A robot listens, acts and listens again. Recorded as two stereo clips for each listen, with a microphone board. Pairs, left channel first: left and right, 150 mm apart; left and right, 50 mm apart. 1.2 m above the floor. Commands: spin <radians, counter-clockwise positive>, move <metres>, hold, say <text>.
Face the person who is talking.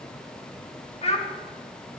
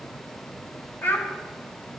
spin 0.79
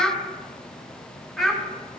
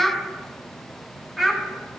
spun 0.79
say Facing the child speaking, 1 to 2 m away.